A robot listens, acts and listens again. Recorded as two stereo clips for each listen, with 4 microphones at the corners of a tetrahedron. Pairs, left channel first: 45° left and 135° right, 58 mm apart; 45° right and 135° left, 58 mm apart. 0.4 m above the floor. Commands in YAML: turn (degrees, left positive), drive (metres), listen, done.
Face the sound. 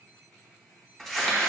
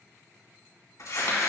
turn: -40
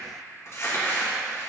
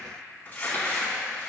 turn: 10
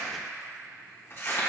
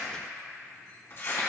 done: "Facing the crumpling, 2 to 4 m away."